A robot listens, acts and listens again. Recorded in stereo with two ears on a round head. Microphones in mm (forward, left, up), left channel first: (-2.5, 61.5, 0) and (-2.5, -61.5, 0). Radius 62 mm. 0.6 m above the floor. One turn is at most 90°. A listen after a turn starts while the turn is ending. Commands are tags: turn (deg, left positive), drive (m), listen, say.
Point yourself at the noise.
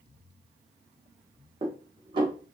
<turn deg="-35"/>
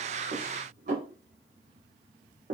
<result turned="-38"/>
<turn deg="-90"/>
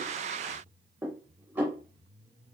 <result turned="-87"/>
<turn deg="-15"/>
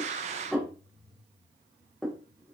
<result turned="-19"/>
<say>Facing the dishes clattering, under 1 m away.</say>